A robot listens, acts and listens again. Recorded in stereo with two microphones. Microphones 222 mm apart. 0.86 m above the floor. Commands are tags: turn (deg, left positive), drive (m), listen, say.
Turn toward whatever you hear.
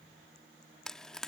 <turn deg="30"/>
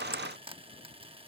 <turn deg="-25"/>
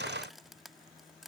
<listen/>
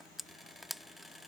<say>Facing the frying.</say>